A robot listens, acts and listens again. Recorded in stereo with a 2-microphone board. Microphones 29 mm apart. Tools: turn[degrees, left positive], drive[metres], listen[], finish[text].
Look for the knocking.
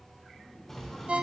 Action: turn[30]
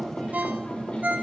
Thought: So it is at 135° left.
Action: turn[135]
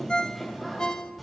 Action: finish[Found it: knocking, straight ahead, 2 to 4 m away.]